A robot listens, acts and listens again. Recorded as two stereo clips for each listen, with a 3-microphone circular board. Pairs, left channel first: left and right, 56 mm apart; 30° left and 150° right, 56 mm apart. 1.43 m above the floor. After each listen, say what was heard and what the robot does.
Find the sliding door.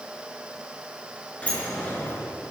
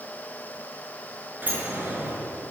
The sliding door: 155° left. Turn 155° left.
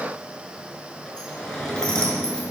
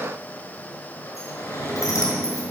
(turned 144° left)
The sliding door is now 10° left. Turn 10° left.
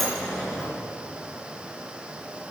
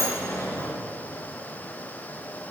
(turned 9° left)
Facing the sliding door, over 4 m away.